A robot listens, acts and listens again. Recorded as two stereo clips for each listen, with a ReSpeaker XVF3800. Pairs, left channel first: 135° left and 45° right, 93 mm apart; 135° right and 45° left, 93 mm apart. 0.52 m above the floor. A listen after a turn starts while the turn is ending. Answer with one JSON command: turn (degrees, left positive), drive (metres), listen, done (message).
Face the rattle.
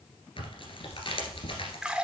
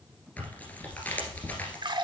{"listen": true}
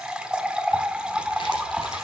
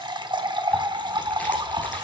{"listen": true}
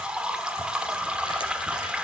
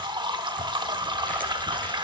{"done": "I can't make out a rattle to turn to."}